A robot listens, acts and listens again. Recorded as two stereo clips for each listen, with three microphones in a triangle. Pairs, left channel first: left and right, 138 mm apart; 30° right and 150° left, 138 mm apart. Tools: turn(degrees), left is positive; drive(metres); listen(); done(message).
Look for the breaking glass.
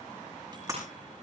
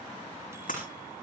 turn(degrees=-25)
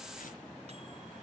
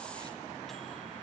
done("I heard breaking glass from this way, but can't make it out now.")